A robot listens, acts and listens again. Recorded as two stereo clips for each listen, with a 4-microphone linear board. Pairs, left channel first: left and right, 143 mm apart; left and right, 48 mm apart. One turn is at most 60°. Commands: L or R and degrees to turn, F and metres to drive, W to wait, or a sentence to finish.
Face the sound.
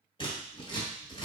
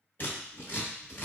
L40
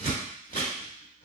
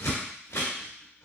L60
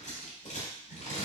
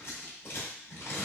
L60
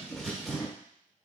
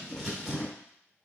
Found it: scissors, straight ahead, 1 to 2 m away.